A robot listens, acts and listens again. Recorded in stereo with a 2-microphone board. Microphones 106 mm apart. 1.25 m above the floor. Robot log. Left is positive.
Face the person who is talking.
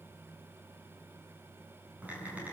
cmd idle
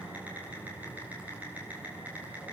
cmd idle
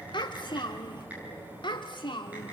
note: The child speaking: about 45° left or 135° left.
cmd yaw +45
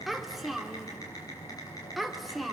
end: Found it: a child speaking, straight ahead.